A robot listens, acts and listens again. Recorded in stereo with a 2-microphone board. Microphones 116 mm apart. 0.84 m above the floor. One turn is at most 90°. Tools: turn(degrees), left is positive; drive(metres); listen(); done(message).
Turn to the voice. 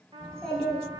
turn(degrees=30)
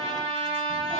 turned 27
listen()
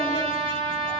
listen()
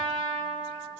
done("I heard a child speaking, but can't make it out now. It was about 20° right or 145° left.")